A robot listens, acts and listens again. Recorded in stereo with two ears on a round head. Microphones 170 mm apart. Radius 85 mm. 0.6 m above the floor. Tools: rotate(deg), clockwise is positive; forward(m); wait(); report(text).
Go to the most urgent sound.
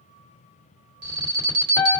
rotate(60)
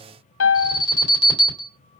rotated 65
rotate(30)
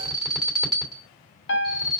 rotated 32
forward(1.0)
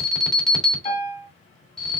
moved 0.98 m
forward(1.0)
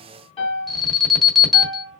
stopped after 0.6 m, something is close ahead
report("I am next to the alarm.")